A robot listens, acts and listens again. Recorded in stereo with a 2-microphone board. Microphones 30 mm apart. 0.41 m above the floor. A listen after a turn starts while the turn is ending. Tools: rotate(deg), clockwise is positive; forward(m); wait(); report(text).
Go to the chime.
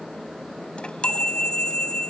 rotate(-35)
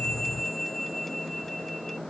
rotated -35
forward(1.0)
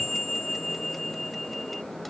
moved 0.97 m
forward(1.0)
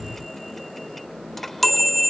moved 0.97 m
rotate(-10)
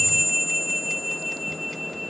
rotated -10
forward(1.0)
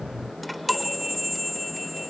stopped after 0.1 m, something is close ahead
report("Arrived at the chime, straight ahead.")